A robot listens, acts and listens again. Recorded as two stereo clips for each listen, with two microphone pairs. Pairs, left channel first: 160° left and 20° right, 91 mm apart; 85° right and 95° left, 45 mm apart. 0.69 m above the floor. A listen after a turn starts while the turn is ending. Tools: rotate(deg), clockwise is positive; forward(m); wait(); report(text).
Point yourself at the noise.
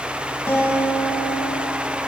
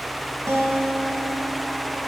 rotate(-100)
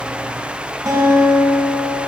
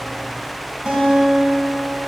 rotate(-30)
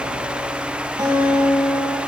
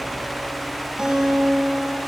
rotate(-20)
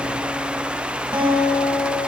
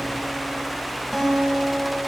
rotate(-10)
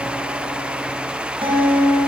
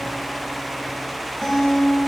report("Facing the guitar, 2 to 4 m away.")